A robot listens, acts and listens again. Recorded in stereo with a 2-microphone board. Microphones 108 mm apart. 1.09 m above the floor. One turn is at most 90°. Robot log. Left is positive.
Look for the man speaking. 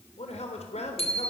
cmd yaw +90
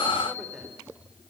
cmd idle
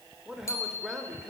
end: Facing the man speaking.